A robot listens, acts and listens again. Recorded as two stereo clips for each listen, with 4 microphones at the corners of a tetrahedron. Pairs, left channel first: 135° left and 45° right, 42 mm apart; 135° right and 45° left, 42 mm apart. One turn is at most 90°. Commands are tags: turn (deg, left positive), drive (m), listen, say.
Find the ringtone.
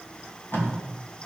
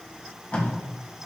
<listen/>
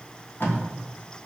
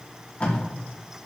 <listen/>
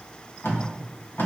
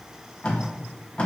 <say>I can't make out a ringtone, only tape being pulled.</say>